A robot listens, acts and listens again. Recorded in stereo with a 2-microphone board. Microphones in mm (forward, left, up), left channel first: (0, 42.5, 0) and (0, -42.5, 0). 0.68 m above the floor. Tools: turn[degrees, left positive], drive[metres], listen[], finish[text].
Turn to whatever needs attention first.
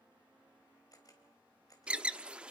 Action: turn[-30]
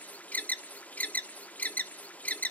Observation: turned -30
Thought: So it is at 20° left.
Action: turn[20]
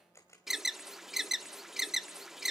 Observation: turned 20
Action: finish[Facing the alarm.]